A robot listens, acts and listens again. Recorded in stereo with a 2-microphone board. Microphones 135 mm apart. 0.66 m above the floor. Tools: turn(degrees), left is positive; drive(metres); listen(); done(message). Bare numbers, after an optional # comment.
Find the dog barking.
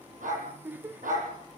turn(-90)
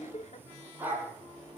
# So it is at 15° right.
turn(-15)
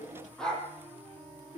done("Facing the dog barking.")